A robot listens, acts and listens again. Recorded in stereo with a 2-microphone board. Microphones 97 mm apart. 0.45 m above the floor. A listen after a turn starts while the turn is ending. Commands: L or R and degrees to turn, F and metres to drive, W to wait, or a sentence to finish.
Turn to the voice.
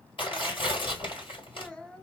L30
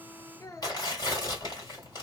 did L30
L140
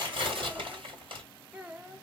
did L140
R15
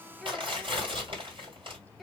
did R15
Facing the child speaking.